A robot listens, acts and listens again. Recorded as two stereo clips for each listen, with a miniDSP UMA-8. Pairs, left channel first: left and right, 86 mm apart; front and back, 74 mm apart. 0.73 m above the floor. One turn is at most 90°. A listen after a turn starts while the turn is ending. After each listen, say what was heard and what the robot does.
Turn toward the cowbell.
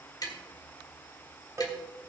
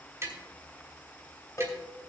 The cowbell: 40° right. Turn 40° right.
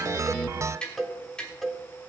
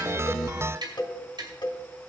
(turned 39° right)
Facing the cowbell.